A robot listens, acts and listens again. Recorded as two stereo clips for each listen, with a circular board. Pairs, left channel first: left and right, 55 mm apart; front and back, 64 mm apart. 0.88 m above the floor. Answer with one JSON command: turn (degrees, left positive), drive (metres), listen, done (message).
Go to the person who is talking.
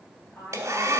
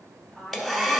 {"turn": 85}
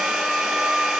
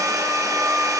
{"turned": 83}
{"listen": true}
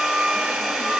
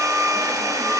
{"listen": true}
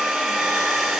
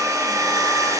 {"done": "I heard a woman speaking from this way, but can't make it out now. I did not reach it."}